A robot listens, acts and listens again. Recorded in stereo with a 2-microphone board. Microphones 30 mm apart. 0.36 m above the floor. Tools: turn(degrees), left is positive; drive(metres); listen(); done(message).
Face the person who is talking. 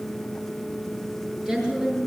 turn(degrees=-30)
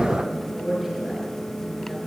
done("Found it: a woman speaking, straight ahead.")